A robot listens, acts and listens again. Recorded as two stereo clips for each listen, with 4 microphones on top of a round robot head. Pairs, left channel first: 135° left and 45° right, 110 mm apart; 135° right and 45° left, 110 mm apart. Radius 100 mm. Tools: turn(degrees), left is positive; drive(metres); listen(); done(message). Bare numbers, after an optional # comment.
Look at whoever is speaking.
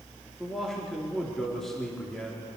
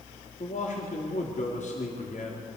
# The man speaking: 140° right.
turn(-140)
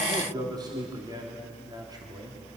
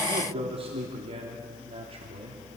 # The man speaking is now 10° left.
turn(10)
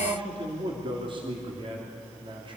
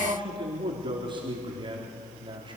done("Found it: a man speaking, straight ahead.")